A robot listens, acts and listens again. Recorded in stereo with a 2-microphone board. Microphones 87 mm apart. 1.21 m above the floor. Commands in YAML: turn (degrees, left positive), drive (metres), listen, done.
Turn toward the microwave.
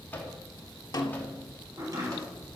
turn: 25
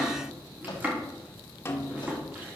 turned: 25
listen: true
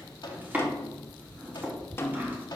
turn: 130
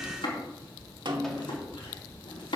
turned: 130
listen: true
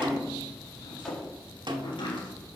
listen: true
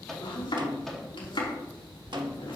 done: "Facing the microwave, 2 to 4 m away."